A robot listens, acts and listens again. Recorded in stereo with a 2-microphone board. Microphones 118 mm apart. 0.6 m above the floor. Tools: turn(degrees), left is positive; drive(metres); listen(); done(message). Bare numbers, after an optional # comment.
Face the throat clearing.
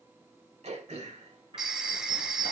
# The throat clearing: about 70° right or 110° right.
turn(-70)
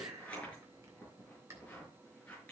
# So it is at 25° right.
turn(-25)
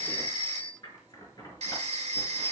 listen()
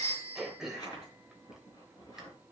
done("Found it: throat clearing, straight ahead.")